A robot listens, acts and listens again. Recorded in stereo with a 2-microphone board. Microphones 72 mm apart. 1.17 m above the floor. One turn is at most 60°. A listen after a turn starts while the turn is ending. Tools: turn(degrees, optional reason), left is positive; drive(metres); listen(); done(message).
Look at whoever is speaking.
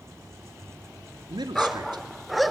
turn(degrees=-60)
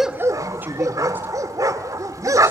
turn(degrees=-25, reason="So it is at 25° right.")
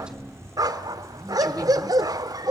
listen()
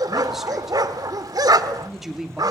done("Facing the man speaking.")